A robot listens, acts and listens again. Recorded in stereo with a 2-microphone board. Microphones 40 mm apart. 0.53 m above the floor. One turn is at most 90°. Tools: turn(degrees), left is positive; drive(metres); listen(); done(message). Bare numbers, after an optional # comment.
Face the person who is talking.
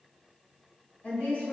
# The woman speaking: about 55° left or 125° left.
turn(55)
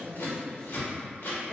# So it is at 10° left.
turn(10)
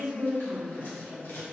done("Found it: a woman speaking, straight ahead.")